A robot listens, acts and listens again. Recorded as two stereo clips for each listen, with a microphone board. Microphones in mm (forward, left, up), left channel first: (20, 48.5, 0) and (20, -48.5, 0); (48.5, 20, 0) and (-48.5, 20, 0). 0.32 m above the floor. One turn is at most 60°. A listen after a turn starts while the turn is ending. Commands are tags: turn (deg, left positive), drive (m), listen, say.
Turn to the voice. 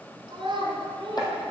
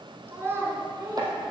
<turn deg="-60"/>
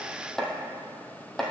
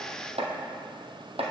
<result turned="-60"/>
<turn deg="-60"/>
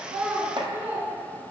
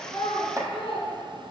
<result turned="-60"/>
<turn deg="-15"/>
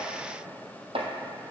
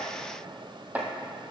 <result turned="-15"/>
<listen/>
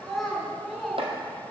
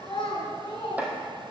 <say>Found it: a child speaking, straight ahead.</say>